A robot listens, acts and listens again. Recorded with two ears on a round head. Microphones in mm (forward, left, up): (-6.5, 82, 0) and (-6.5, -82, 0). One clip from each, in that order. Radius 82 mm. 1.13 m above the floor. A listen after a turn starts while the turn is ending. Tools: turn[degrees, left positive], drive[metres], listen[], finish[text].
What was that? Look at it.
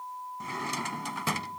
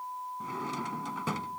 Thought: The drawer: about 55° left or 125° left.
Action: turn[55]
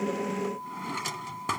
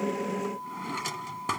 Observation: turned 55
Action: finish[Facing the drawer.]